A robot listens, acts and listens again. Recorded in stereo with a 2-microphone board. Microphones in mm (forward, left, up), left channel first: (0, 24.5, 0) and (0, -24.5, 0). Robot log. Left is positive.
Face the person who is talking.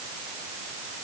cmd idle
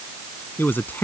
note: The man speaking: about 45° left or 135° left.
cmd yaw +45
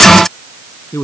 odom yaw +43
note: So it is at 100° left.
cmd yaw +100
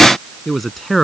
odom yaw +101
end: Found it: a man speaking, straight ahead.